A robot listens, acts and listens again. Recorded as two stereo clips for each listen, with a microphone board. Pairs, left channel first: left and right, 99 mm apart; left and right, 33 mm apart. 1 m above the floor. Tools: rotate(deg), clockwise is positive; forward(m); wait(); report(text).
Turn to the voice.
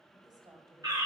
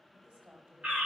rotate(40)
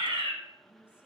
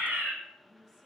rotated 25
rotate(15)
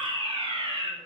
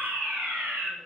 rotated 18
wait()
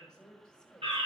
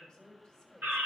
rotate(-10)
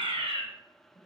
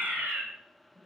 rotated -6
rotate(-10)
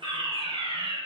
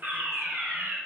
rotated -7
wait()
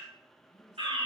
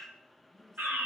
report("Facing the woman speaking, over 4 m away.")